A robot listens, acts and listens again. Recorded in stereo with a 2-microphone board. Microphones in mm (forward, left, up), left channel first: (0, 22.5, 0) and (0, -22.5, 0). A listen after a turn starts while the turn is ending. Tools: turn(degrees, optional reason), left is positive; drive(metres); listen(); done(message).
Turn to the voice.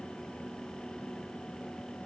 listen()
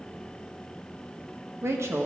turn(degrees=-70, reason="The woman speaking: about 70° right or 110° right.")
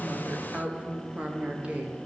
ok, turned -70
turn(degrees=-25, reason="So it is at 25° right.")
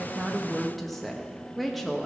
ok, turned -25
done("Found it: a woman speaking, straight ahead, 1 to 2 m away.")